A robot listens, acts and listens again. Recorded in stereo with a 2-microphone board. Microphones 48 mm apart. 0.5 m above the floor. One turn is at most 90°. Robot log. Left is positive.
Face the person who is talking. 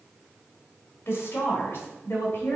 note: The woman speaking: about 60° left or 120° left.
cmd yaw +60
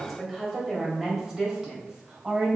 note: So it is at 20° right.
cmd yaw -20
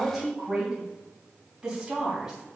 note: The woman speaking is now 10° right.
cmd yaw -10
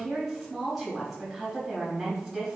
end: Found it: a woman speaking, straight ahead.